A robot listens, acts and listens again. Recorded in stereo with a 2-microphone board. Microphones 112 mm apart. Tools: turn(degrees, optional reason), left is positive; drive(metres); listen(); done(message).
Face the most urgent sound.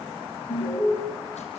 turn(degrees=50, reason="The alarm: about 50° left or 130° left.")
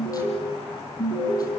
turn(degrees=75, reason="So it is at 75° left.")
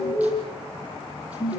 turn(degrees=30, reason="The alarm is now 30° left.")
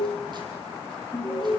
done("Facing the alarm, over 4 m away.")